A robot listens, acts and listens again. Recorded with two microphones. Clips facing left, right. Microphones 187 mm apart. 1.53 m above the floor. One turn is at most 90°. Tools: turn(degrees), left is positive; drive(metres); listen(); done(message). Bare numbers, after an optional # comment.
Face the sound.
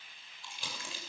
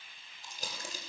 # The crumpling: about 40° right or 140° right.
turn(-40)
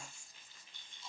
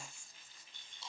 # So it is at 100° right.
turn(-90)
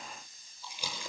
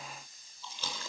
# The crumpling is now 15° left.
turn(15)
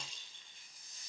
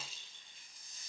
done("Found it: crumpling, straight ahead.")